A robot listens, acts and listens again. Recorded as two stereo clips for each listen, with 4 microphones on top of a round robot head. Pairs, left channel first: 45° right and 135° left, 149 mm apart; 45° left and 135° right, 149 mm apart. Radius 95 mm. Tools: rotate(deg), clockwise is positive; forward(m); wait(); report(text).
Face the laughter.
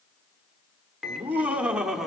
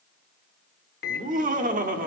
rotate(135)
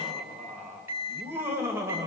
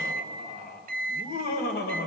rotate(-60)
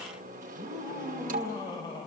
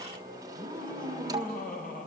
rotate(-20)
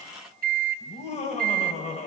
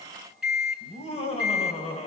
report("Facing the laughter, 2 to 4 m away.")